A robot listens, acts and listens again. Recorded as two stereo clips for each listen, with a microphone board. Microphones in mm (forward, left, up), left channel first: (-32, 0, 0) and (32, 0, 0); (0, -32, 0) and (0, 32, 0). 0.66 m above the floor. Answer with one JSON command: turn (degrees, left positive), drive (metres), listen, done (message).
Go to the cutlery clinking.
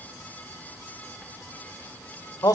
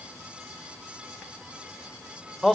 {"listen": true}
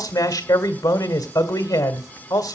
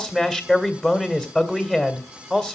{"listen": true}
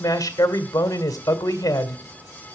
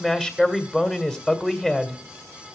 {"done": "I can't make out cutlery clinking to turn to."}